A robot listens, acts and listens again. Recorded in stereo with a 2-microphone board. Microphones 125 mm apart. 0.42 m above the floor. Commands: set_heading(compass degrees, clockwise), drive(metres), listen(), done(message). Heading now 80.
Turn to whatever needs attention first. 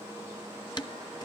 listen()
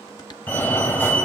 set_heading(65)
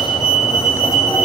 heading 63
set_heading(273)
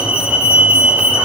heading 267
set_heading(277)
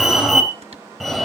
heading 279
done("Facing the fire alarm.")